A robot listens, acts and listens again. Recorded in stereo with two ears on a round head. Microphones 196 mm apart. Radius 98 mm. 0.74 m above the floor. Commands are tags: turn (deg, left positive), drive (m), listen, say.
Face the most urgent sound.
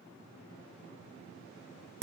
<listen/>
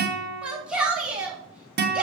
<turn deg="-30"/>
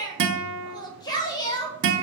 <turn deg="25"/>
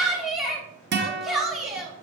<say>Found it: a shout, straight ahead.</say>